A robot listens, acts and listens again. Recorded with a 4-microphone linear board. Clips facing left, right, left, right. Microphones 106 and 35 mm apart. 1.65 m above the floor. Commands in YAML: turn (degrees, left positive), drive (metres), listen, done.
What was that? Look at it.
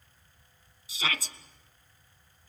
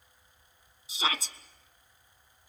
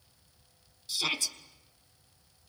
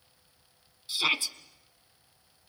turn: -25
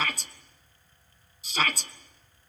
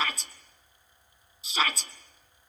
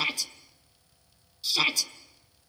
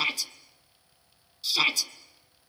done: "Facing the shout, 1 to 2 m away."